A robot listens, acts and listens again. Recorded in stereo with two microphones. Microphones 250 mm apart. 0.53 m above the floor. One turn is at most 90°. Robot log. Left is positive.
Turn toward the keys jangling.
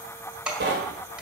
cmd yaw -30
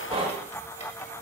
cmd idle
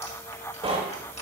cmd idle
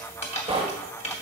note: So it is at 25° left.
cmd yaw +25
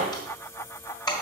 note: The keys jangling is now 15° left.
cmd yaw +15
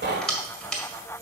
end: Facing the keys jangling.